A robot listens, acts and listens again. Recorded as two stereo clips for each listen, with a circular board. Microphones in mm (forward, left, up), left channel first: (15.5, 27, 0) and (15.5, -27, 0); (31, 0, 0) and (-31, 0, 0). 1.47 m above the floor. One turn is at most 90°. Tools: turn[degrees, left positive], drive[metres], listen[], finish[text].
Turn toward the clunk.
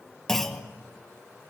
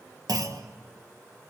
Thought: The clunk: 170° left.
Action: turn[90]
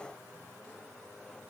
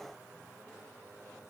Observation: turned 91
Thought: Nothing new. It was at 80° left.
Action: turn[80]
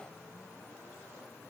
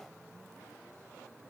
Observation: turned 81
Action: finish[I heard a clunk from this way, but can't make it out now.]